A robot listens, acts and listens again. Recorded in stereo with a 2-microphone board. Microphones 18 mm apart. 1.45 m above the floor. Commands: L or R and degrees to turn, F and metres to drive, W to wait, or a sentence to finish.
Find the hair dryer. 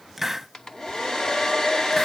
L35
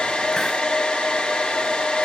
L110
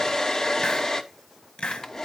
L30
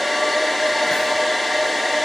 Found it: a hair dryer, straight ahead.